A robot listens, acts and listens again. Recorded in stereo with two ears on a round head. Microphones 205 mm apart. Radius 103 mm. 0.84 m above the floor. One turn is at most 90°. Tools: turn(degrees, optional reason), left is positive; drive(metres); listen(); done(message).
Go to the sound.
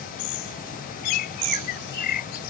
turn(degrees=40, reason="The bird: about 40° left or 140° left.")
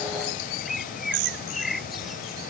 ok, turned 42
drive(metres=1.0)
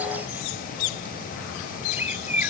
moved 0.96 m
turn(degrees=-10, reason="The bird is now 10° right.")
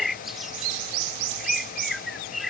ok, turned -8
drive(metres=1.0)
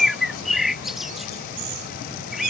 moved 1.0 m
drive(metres=1.0)
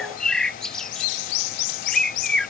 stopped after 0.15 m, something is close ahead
done("I am next to the bird.")